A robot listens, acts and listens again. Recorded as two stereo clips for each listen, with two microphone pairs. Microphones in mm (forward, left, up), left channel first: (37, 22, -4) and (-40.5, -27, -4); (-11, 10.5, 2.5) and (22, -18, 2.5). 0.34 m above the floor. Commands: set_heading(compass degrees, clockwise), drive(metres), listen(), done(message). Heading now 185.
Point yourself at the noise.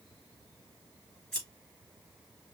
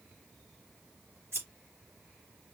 set_heading(240)
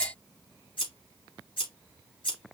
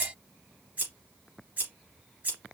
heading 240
set_heading(230)
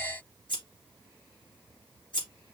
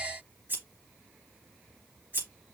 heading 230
done("Facing the scissors, 2 to 4 m away.")